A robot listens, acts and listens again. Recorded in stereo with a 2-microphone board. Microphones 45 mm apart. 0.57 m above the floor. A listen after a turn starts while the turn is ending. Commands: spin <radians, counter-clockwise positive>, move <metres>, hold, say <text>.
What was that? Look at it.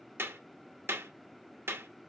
spin -1.05
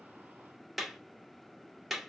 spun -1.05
say Found it: a clap, straight ahead, under 1 m away.